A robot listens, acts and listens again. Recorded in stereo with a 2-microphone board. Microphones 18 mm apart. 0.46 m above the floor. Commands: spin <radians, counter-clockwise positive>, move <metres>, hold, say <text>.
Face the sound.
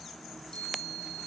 spin 1.22
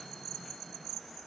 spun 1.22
hold
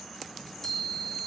spin 0.44
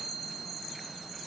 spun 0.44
say Facing the chime.